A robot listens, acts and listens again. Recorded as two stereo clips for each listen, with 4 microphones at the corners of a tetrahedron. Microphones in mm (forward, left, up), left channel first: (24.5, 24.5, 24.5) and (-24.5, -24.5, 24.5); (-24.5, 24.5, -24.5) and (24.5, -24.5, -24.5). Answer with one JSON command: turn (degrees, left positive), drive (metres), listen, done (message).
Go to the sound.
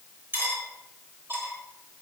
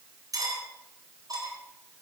{"turn": -75}
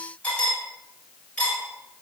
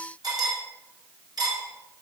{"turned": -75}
{"turn": -25}
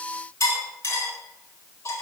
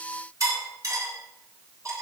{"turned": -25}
{"drive": 1.0}
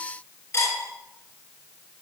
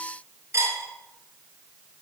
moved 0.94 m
{"drive": 1.0}
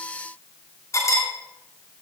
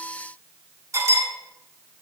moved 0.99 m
{"drive": 1.0}
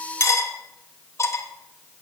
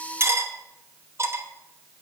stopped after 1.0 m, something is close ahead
{"done": "Arrived at the cutlery clinking, straight ahead."}